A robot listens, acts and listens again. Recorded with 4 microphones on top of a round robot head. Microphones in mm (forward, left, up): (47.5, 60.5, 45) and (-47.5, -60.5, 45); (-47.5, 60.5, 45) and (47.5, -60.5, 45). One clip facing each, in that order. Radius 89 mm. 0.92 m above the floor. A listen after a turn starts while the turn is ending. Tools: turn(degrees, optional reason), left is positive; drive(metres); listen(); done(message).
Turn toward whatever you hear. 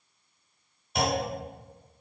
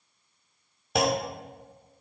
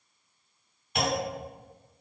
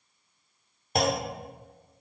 turn(degrees=-105, reason="The clunk: 105° right.")
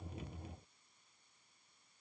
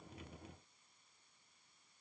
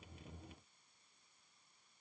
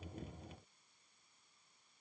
done("I heard a clunk from this way, but can't make it out now.")